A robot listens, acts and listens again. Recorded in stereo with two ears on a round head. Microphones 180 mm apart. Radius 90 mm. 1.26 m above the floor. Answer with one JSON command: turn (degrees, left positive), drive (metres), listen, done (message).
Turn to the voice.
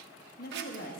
{"turn": 45}
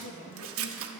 {"turn": 85}
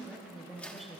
{"done": "Facing the woman speaking, 1 to 2 m away."}